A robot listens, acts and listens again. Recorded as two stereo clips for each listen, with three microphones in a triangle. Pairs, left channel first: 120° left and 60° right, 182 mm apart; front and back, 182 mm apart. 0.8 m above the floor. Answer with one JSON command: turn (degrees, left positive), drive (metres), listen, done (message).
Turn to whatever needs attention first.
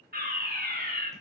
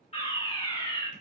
{"turn": -50}
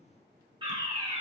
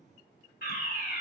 {"done": "Facing the fire alarm, 2 to 4 m away."}